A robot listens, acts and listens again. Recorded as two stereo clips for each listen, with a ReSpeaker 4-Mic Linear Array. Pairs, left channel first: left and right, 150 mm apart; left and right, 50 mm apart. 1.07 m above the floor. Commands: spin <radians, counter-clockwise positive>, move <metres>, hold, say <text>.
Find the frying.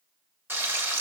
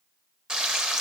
spin -0.52
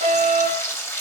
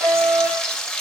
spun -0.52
spin 0.26
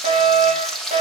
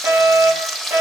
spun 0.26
say Facing the frying, under 1 m away.